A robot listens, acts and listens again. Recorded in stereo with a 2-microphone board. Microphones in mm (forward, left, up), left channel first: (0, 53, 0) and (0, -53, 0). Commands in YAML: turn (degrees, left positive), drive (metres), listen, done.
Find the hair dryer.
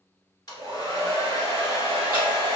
turn: 40
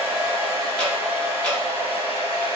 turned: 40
turn: 95
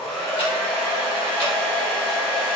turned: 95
done: "Facing the hair dryer, 1 to 2 m away."